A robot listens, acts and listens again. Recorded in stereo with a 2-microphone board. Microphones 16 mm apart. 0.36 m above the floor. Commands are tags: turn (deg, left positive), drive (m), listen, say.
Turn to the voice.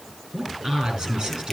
<turn deg="-75"/>
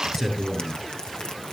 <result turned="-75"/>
<say>Facing the man speaking, over 4 m away.</say>